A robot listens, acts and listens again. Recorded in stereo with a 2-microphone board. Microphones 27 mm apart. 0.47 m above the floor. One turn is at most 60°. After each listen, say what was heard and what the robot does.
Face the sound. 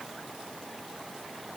Keep listening.
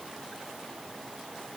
Keep listening.
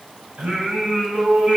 The singing: about 45° right or 135° right. Turn 45° right.
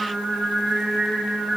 So it is at 115° right. Turn 60° right.
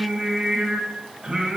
The singing is now 40° right. Turn 40° right.
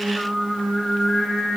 The singing is now 15° left. Turn 15° left.
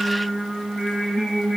Facing the singing.